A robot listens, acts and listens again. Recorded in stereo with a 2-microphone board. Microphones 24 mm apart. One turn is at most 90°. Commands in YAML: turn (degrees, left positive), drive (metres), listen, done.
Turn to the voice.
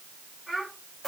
turn: -30
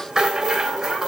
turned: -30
listen: true
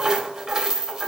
listen: true
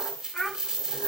turn: 20
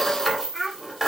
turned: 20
done: "Facing the child speaking, over 4 m away."